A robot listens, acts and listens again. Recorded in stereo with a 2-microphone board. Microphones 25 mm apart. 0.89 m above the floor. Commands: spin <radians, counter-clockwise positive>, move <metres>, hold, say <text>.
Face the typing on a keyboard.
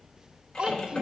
spin 0.44
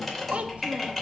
say Found it: typing on a keyboard, straight ahead, 2 to 4 m away.